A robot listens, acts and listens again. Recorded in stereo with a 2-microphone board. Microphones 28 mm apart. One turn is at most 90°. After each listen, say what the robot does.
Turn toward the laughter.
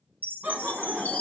Turn 60° right.
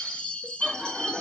Found it: laughter, straight ahead, 2 to 4 m away.